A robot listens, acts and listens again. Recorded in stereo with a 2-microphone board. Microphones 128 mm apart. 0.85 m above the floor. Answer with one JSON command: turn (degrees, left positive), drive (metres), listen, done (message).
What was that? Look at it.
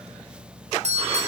{"turn": -65}
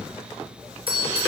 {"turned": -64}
{"turn": -50}
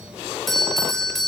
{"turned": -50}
{"done": "Found it: a doorbell, straight ahead, over 4 m away."}